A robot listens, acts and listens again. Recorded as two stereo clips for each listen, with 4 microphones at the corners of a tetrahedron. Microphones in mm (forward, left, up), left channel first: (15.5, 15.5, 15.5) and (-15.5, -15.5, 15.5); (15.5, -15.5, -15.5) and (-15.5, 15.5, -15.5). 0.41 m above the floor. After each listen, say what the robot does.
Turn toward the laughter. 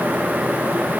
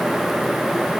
Keep listening.
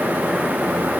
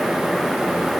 Keep listening.
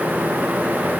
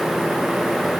I can't make out laughter.